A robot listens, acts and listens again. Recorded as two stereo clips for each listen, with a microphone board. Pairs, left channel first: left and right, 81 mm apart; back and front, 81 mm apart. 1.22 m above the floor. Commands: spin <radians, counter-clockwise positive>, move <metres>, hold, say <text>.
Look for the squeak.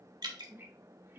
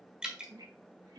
spin -0.52
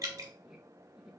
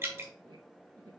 say Found it: a squeak, straight ahead, 1 to 2 m away.